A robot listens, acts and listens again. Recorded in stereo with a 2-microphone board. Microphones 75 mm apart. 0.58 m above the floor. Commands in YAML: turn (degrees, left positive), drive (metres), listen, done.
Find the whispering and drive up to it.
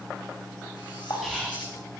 turn: 30
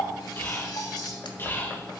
turn: 150
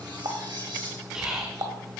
turn: -10
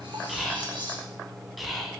drive: 1.0
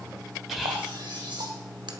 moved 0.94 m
drive: 1.0
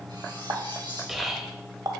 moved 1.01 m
drive: 1.0
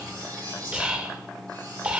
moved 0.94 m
turn: -15
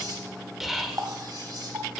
drive: 1.0
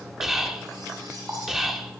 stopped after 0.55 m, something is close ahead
done: "I am next to the whispering."